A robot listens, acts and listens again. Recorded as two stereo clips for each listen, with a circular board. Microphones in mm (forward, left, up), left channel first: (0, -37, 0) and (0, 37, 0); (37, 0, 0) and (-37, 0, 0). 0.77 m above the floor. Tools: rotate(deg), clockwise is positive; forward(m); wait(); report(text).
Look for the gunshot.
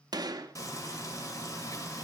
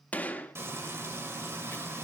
rotate(-70)
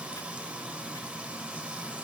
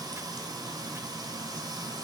report("I heard a gunshot from this way, but can't make it out now.")